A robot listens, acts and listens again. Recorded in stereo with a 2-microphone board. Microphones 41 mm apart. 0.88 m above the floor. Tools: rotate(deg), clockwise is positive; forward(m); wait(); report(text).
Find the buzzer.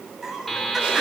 rotate(-30)
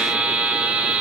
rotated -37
rotate(30)
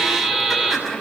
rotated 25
report("Facing the buzzer.")